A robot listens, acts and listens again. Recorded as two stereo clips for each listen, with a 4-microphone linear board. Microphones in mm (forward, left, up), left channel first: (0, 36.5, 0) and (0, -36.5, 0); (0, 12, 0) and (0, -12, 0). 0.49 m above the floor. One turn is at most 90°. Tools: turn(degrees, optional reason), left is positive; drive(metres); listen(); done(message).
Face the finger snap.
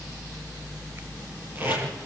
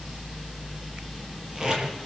listen()
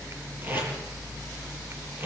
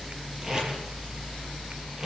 listen()
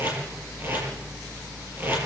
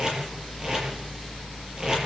done("I can't make out a finger snap to turn to.")